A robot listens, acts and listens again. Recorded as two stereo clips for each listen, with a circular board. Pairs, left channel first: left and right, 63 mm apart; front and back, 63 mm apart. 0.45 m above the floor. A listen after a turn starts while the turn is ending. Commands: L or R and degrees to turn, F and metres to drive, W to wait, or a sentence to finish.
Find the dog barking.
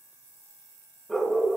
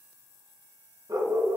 L175
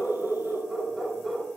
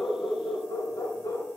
Facing the dog barking.